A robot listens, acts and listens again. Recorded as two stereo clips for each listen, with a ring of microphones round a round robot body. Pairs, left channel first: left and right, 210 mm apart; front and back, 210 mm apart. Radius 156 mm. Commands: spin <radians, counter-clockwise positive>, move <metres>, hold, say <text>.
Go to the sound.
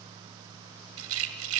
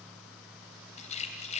spin -1.13
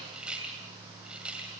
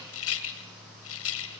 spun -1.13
move 1.0
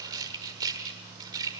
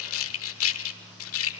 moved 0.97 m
spin -0.26
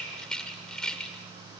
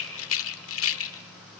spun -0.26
move 1.0
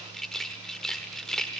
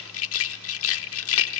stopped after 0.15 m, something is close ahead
say Arrived at the rattle, straight ahead.